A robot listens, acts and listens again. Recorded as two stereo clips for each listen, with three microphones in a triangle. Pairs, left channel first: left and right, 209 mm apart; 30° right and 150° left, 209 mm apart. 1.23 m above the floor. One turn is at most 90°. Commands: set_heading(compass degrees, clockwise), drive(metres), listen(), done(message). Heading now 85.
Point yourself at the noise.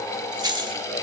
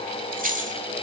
set_heading(175)
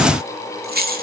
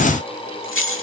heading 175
set_heading(220)
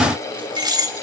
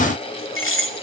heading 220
set_heading(235)
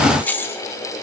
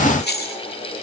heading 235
set_heading(225)
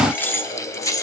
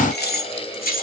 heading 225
set_heading(210)
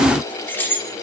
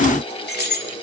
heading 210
set_heading(200)
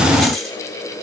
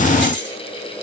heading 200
done("Facing the keys jangling, 2 to 4 m away.")